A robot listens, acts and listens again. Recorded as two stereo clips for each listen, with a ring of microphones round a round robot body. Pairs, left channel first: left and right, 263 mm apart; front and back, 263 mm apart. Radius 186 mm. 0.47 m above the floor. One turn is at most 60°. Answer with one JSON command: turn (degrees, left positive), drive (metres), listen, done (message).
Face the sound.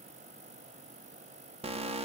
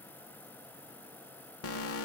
{"turn": -25}
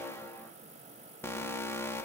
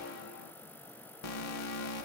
{"turn": 10}
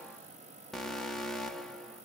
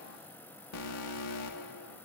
{"done": "Found it: an alarm, straight ahead, 1 to 2 m away."}